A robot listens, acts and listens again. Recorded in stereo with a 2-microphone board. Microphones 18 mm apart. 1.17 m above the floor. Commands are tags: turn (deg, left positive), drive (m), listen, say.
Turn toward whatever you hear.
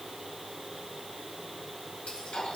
<turn deg="70"/>
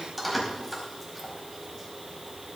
<say>Facing the keys jangling, over 4 m away.</say>